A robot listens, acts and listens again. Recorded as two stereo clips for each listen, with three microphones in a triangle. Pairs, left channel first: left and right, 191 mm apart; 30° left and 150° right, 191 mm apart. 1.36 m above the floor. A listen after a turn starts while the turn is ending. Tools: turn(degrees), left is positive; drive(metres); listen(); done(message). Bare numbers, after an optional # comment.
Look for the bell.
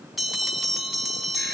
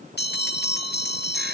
done("Facing the bell.")